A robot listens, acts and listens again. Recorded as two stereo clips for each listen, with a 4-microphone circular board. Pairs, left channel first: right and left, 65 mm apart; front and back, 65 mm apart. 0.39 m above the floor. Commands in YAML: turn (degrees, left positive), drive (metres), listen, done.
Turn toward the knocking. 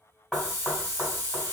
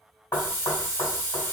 done: "Found it: knocking, straight ahead, 1 to 2 m away."